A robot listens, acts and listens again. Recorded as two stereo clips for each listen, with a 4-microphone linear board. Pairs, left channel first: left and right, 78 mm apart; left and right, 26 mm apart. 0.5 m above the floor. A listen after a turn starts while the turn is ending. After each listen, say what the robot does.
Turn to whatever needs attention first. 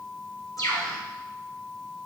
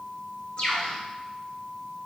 Keep listening.
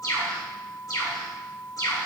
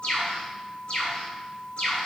Keep listening.
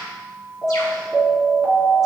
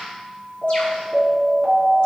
Turn 30° right.
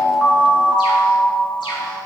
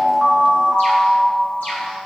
Turn 20° left.
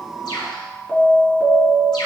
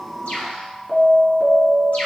Turn 10° left.
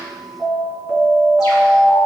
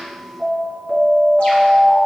Facing the alarm, 2 to 4 m away.